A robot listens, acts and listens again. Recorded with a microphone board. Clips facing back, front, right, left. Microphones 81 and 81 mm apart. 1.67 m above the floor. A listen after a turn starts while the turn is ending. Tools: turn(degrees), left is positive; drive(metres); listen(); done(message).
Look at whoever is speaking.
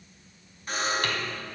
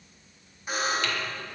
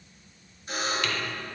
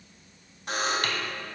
listen()
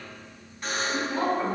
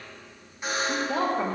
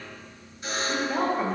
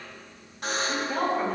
turn(degrees=-10)
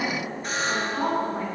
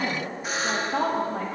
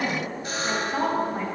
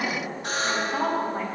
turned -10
done("Found it: a woman speaking, straight ahead.")